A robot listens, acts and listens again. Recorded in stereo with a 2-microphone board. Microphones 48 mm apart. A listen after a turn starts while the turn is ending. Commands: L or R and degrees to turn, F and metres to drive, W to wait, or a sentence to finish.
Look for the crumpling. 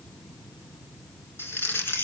L55
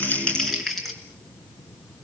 Found it: crumpling, straight ahead.